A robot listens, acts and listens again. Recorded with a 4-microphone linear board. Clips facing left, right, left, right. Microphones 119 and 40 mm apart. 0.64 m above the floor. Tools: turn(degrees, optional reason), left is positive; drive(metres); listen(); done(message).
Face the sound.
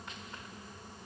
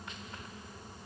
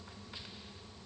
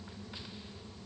listen()
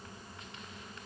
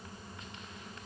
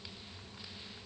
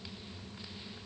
listen()
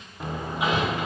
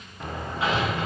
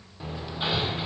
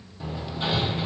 turn(degrees=30)
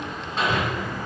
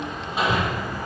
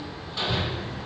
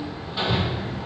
turn(degrees=-10, reason="So it is at 10° right.")
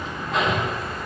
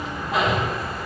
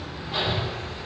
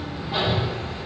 done("Found it: hammering, straight ahead, 1 to 2 m away.")